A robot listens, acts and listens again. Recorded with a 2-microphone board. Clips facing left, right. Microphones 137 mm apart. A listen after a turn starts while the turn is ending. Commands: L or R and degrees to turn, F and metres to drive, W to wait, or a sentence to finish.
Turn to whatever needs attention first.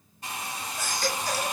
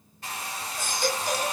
R30
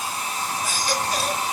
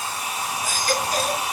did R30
R135
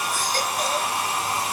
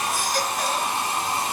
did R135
W
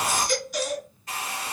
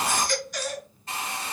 Facing the baby crying, 2 to 4 m away.